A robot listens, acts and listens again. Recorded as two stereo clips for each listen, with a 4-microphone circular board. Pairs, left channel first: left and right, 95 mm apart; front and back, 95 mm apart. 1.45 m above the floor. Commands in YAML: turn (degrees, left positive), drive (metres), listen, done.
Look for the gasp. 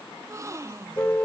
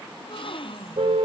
turn: -30
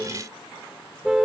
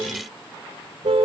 done: "Facing where the gasp came from. I can't hear it now."